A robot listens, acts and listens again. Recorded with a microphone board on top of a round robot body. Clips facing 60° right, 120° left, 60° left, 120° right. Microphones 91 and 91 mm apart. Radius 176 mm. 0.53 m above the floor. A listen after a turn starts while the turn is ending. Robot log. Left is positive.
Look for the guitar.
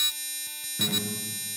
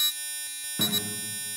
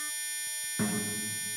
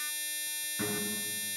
note: The guitar: 140° left.
cmd yaw +140
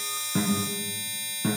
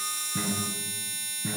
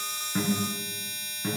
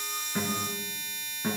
note: The guitar is now 40° right.
cmd yaw -40
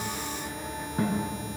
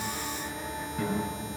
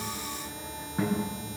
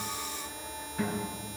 end: Facing the guitar.